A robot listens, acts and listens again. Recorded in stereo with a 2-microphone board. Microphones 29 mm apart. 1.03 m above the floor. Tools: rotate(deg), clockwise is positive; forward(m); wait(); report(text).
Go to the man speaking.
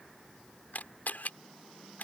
wait()
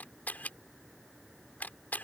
wait()
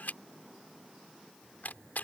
report("I can't make out a man speaking to turn to.")